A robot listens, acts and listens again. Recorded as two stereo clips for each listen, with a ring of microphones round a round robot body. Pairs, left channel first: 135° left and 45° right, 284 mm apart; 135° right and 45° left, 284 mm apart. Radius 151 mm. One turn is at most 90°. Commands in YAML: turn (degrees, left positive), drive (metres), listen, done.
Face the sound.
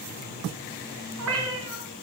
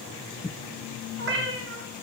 done: "Facing the cat meowing, 1 to 2 m away."